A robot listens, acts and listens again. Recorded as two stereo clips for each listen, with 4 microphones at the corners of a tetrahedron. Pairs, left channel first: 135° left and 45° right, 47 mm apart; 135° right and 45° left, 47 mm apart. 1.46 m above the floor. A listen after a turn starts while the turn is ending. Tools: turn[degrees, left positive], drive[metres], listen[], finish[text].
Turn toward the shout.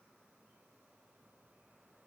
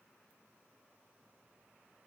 Action: listen[]
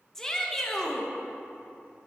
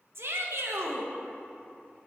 Thought: The shout: 60° left.
Action: turn[60]
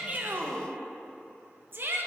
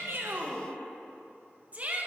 Thought: The shout is now 10° right.
Action: turn[-10]
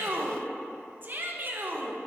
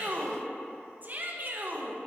Action: finish[Found it: a shout, straight ahead.]